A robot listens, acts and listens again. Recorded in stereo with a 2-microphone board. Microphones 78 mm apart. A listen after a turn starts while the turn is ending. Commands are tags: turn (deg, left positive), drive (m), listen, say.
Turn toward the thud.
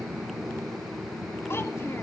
<listen/>
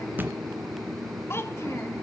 <turn deg="-25"/>
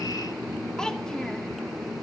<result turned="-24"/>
<listen/>
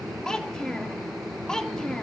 <say>I heard a thud, but can't make it out now. It was about straight ahead or 130° right.</say>